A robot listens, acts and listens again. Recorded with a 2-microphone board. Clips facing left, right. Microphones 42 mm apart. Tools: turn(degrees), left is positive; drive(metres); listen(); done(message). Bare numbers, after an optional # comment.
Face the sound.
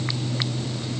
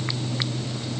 listen()
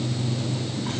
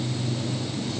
listen()
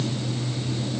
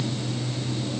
done("I can't make out anything.")